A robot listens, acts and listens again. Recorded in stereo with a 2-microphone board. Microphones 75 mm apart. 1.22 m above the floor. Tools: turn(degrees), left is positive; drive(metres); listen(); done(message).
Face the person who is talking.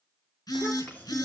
turn(degrees=25)
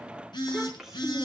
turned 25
done("Facing the child speaking.")